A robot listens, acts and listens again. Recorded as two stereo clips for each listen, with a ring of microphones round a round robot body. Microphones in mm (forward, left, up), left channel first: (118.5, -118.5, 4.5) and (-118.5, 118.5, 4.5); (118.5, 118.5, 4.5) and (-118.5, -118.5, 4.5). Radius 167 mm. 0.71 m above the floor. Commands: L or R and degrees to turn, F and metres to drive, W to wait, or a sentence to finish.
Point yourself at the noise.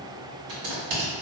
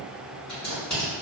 L130
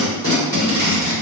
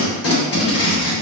L35
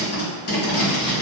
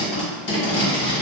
Facing the tape being pulled, 1 to 2 m away.